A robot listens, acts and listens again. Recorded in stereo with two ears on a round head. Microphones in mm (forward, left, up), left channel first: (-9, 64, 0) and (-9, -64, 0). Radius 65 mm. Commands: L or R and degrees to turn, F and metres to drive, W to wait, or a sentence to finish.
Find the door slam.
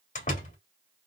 L50
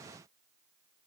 W
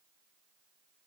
I heard a door slam, but can't make it out now. It was about straight ahead or 80° left.